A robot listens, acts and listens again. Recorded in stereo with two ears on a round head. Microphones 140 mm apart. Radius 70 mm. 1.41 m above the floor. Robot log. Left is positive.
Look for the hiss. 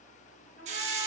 note: The hiss: about 45° right or 135° right.
cmd yaw -45
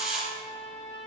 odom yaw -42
end: Found it: a hiss, straight ahead, 1 to 2 m away.